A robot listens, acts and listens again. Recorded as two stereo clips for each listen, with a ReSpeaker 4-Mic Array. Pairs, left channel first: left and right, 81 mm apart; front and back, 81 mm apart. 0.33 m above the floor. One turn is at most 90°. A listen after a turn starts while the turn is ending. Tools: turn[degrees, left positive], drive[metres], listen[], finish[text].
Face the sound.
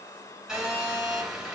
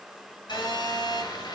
Action: finish[Found it: a phone buzzing, straight ahead.]